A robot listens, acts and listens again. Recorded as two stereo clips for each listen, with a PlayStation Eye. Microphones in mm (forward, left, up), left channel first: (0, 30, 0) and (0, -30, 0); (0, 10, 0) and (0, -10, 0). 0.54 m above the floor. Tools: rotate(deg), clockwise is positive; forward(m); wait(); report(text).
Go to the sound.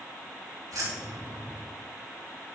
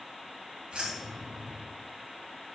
rotate(90)
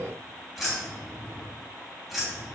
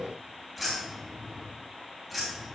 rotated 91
forward(1.0)
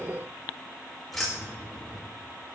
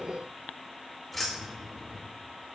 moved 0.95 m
forward(1.0)
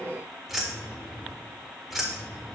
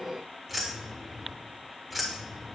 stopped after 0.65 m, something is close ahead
report("I am next to the keys jangling.")